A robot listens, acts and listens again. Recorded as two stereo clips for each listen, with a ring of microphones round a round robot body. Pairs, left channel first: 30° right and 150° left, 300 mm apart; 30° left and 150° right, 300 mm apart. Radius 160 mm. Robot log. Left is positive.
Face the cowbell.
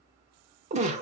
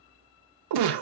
cmd idle
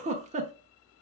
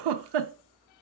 cmd idle
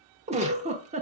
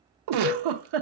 end: Found it: a cowbell, straight ahead, 2 to 4 m away.